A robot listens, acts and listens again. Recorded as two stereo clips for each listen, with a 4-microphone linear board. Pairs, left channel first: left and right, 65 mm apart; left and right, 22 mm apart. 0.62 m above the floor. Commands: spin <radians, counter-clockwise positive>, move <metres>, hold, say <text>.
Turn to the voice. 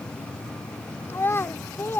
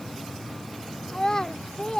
spin 0.61
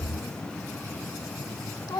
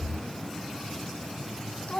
spin 1.92
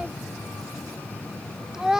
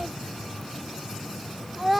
spin -0.17
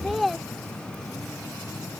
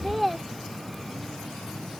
say Found it: a child speaking, straight ahead.